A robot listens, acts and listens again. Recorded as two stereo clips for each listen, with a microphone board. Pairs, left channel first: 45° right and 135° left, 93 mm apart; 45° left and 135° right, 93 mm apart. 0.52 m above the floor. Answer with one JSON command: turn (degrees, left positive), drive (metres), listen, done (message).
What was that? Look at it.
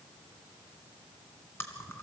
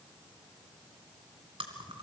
{"turn": -110}
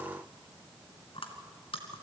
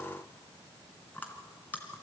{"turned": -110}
{"turn": -25}
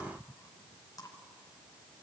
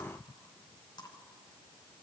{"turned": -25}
{"done": "Found it: chewing, straight ahead."}